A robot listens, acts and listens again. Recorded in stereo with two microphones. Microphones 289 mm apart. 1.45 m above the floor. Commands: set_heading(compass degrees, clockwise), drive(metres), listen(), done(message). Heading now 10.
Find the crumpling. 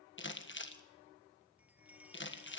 set_heading(330)
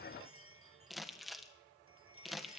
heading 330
done("Found it: crumpling, straight ahead.")